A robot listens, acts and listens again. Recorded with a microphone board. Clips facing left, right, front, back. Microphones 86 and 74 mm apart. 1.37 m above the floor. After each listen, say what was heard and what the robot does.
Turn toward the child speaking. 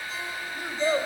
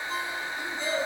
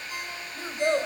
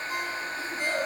The child speaking: 40° left. Turn 40° left.
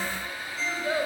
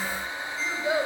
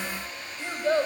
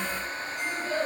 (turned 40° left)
The child speaking is now 15° right. Turn 15° right.
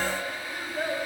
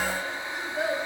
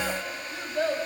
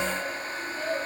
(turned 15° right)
The child speaking is now 10° right. Turn 10° right.
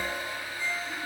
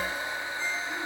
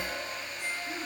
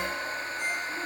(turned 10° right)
Keep listening.
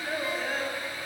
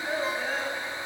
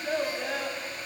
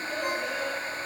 Found it: a child speaking, straight ahead, over 4 m away.